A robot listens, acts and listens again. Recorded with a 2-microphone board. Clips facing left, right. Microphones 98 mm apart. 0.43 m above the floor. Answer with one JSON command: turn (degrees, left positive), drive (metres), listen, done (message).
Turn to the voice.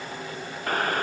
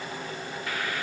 {"listen": true}
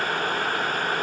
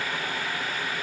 {"listen": true}
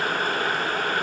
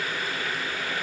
{"done": "I can't make out anyone speaking, only boiling."}